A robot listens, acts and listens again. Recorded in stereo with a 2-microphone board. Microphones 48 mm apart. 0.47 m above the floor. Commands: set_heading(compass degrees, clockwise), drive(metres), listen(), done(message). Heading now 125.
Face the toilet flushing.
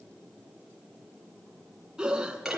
listen()
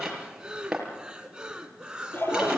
set_heading(70)
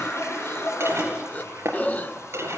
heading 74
set_heading(359)
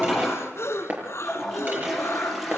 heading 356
done("Found it: a toilet flushing, straight ahead.")